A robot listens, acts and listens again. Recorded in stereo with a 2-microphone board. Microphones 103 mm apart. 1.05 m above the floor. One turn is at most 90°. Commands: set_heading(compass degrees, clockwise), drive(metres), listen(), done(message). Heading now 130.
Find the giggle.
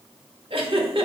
set_heading(195)
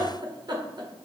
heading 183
set_heading(233)
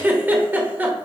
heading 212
set_heading(232)
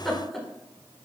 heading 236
done("Found it: a giggle, straight ahead, 1 to 2 m away.")